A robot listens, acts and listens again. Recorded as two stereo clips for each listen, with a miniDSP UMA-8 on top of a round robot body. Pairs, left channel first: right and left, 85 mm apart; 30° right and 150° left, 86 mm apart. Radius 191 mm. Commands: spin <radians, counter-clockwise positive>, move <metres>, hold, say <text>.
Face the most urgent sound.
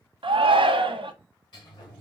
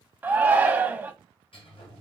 spin 1.40
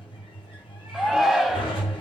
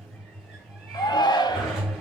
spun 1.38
say Facing the shout, 1 to 2 m away.